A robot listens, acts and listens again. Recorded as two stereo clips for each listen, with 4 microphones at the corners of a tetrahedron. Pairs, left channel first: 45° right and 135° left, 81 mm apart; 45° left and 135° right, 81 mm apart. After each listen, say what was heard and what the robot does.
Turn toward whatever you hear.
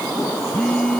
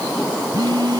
The phone buzzing: 120° right. Turn 120° right.
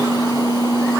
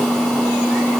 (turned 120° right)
The phone buzzing is now 40° right. Turn 40° right.
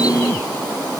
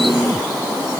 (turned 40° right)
Keep listening.
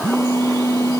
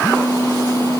Found it: a phone buzzing, straight ahead.